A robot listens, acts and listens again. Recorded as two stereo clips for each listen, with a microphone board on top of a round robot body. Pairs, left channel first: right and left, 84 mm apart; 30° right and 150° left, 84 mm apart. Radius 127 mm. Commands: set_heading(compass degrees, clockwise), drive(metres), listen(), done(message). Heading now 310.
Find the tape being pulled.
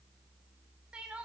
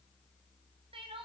listen()
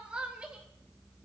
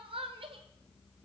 listen()
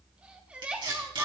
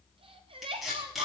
set_heading(250)
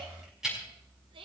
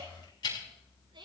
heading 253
done("Facing the tape being pulled, over 4 m away.")